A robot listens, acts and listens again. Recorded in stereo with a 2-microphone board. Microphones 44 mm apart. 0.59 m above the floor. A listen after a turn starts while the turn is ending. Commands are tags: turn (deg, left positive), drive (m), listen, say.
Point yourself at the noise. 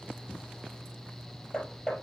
<turn deg="20"/>
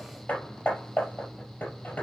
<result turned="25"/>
<turn deg="135"/>
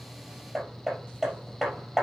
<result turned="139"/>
<say>Found it: hammering, straight ahead, over 4 m away.</say>